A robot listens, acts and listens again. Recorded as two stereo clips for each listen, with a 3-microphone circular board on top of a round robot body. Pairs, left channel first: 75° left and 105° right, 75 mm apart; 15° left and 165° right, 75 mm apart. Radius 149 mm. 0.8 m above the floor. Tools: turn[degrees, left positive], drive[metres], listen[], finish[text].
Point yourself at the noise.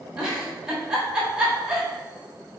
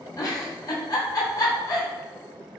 Thought: The giggle: 25° right.
Action: turn[-25]
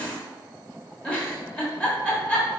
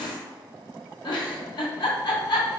Action: finish[Facing the giggle.]